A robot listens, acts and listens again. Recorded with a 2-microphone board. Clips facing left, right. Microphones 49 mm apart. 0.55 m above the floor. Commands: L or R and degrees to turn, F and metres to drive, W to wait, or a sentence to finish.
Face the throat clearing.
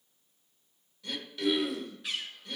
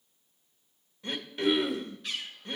R35
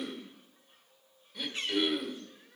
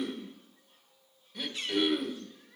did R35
Found it: throat clearing, straight ahead, under 1 m away.